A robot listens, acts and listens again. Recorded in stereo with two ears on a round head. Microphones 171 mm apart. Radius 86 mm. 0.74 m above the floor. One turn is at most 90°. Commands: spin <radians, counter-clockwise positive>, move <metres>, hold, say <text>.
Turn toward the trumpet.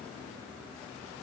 hold
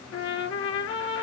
spin 1.57
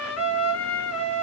spin 0.17
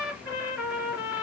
say Facing the trumpet, 2 to 4 m away.